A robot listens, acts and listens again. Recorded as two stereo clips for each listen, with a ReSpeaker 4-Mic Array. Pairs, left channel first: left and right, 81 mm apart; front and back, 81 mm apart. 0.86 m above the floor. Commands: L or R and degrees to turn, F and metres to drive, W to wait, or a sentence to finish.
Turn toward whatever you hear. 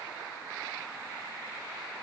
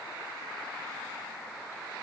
W
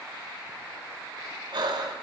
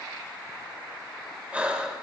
R105
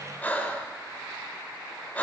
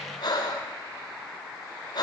L20
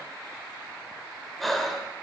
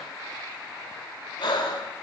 Found it: breathing, straight ahead, 1 to 2 m away.